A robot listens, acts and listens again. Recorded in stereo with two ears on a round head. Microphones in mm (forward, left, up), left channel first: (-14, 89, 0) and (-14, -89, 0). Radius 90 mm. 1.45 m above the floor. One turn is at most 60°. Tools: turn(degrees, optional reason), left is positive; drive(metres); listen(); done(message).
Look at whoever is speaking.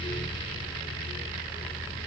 listen()
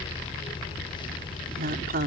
turn(degrees=-45, reason="The woman speaking: about 45° right or 135° right.")
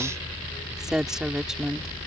done("Found it: a woman speaking, straight ahead.")